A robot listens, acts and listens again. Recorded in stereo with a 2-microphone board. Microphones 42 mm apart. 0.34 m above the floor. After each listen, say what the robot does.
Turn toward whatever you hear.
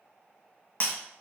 Turn 45° left.
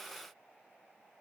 Keep listening.
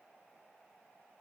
I heard breaking glass, but can't make it out now. It was about straight ahead or 90° left.